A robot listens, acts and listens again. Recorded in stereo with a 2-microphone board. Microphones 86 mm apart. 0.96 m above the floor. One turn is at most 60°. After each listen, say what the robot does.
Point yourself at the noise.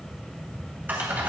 Turn 20° right.
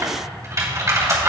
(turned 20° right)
Turn 60° right.
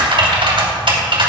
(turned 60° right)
Turn 60° right.
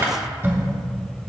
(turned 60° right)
Turn 25° right.
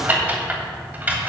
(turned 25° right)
Turn 20° right.
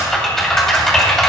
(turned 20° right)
Facing the typing on a keyboard, 2 to 4 m away.